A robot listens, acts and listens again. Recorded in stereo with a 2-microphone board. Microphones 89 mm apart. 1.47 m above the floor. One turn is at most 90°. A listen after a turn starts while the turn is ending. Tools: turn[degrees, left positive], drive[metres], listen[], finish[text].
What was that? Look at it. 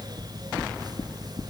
Action: turn[90]
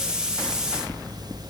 Thought: So it is at 10° right.
Action: turn[-10]
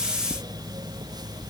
Action: finish[Facing the knocking, 2 to 4 m away.]